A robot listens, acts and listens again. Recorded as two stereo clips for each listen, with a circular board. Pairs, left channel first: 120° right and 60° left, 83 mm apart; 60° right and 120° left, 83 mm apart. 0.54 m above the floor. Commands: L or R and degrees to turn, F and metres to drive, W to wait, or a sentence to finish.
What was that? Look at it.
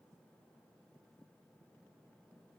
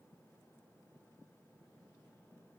W
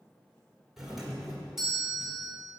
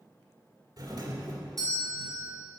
L145
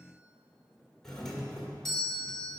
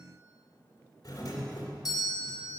R35
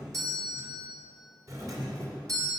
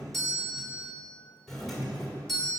L25
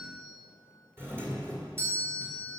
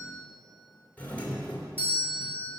Facing the doorbell, 1 to 2 m away.